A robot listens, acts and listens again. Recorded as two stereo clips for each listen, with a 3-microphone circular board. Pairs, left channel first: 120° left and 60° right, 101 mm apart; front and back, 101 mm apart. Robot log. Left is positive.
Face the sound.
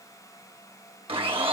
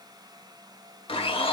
note: The blender: 30° right.
cmd yaw -30
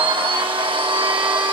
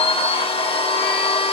note: The blender is now 25° right.
cmd yaw -25
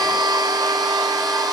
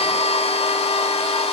note: The blender is now 10° right.
cmd yaw -10
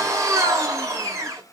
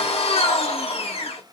end: Facing the blender.